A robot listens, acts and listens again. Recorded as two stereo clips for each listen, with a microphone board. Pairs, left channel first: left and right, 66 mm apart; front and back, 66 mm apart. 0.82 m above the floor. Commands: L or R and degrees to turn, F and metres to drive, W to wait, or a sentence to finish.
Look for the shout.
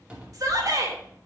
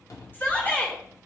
R60
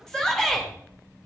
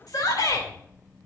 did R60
L10
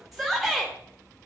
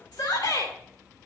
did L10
Found it: a shout, straight ahead.